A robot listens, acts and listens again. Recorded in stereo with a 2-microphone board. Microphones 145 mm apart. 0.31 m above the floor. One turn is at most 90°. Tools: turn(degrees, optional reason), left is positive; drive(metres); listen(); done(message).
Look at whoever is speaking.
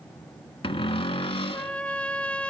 listen()
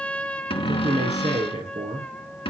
turn(degrees=-55, reason="The man speaking: about 55° right or 125° right.")
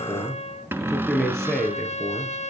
done("Facing the man speaking, over 4 m away.")